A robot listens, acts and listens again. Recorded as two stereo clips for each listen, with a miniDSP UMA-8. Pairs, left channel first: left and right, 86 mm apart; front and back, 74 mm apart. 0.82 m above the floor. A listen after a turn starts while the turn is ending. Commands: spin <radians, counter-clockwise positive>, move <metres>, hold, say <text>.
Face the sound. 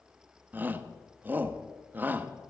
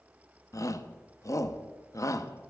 spin -0.44
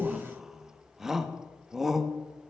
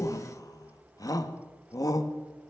say Facing the shout.